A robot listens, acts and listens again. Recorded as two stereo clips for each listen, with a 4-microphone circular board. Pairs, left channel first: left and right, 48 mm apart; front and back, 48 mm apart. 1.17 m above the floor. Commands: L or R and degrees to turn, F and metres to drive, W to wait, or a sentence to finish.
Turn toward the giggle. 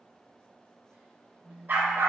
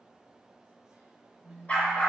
W
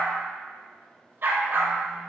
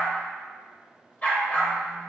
W
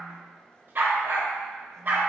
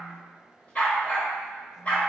I can't make out a giggle, only a phone buzzing and a dog barking.